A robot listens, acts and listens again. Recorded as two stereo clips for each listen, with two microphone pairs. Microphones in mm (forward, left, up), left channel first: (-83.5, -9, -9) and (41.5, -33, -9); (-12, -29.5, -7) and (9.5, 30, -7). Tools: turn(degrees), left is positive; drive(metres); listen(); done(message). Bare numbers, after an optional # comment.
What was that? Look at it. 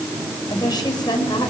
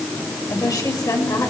# The woman speaking: 135° right.
turn(-135)
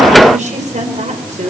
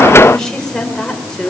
# The woman speaking is now 30° right.
turn(-30)
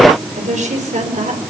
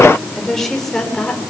# The woman speaking is now 30° right.
turn(-30)
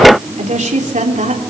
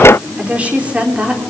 done("Facing the woman speaking, 2 to 4 m away.")